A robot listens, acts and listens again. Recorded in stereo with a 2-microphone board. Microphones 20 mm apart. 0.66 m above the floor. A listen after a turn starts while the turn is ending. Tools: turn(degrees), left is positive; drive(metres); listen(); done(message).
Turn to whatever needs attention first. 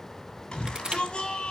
turn(degrees=55)
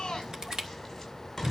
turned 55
done("Found it: a shout, straight ahead.")